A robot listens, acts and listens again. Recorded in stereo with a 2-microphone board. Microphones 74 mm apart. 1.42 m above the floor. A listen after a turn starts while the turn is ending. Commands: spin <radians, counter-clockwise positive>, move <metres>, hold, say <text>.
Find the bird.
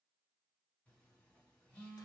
hold
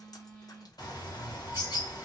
spin 1.05
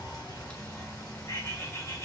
spin 0.87
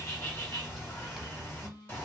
spin 0.52
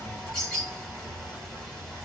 spin 0.17
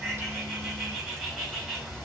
say Facing the bird.